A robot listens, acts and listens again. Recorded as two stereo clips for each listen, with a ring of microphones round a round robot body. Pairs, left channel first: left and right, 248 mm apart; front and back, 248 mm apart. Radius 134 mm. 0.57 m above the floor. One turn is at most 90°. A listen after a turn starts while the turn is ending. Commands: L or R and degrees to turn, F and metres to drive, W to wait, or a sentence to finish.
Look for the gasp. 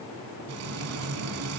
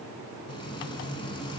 W
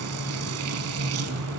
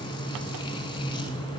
W
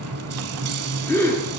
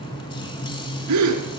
L90
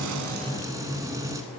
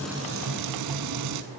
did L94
L80
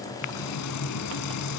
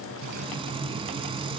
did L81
I heard a gasp from this way, but can't make it out now.